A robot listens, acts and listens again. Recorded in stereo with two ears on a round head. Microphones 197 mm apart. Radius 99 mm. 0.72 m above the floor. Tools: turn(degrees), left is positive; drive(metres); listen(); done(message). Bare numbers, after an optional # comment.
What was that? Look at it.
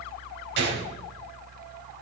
# The gunshot: about 50° right or 130° right.
turn(-50)
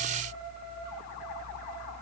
listen()
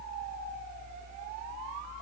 done("I heard a gunshot, but can't make it out now. It was about straight ahead or 80° right.")